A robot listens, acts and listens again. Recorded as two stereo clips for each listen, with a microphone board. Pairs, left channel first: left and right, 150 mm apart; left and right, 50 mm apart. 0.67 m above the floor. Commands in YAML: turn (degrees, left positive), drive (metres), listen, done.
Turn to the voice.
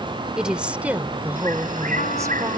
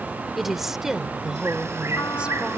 turn: -30
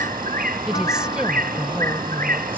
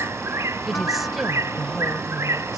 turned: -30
turn: -30
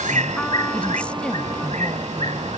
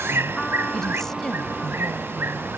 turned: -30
listen: true
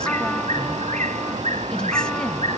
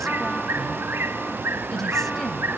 listen: true
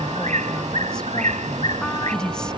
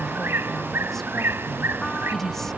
done: "Facing the woman speaking."